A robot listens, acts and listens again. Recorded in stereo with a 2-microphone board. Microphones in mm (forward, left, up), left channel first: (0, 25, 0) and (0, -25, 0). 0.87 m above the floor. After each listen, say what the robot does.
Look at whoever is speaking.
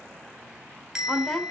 Turn 30° left.
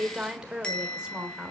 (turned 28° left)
Turn 20° right.
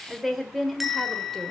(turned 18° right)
Found it: a woman speaking, straight ahead, 2 to 4 m away.